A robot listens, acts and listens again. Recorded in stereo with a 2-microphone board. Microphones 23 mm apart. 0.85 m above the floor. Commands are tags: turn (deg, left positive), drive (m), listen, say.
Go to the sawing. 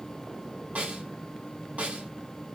<listen/>
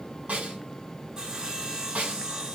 <turn deg="-30"/>
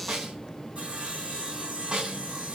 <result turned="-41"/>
<turn deg="-105"/>
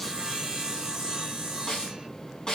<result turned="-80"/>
<turn deg="-25"/>
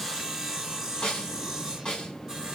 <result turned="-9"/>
<turn deg="-20"/>
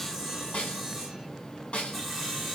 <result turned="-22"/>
<drive m="1.0"/>
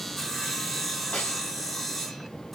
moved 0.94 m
<turn deg="10"/>
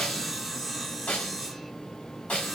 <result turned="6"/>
<drive m="1.0"/>
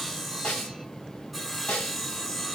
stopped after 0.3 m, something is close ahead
<say>Arrived at the sawing, straight ahead.</say>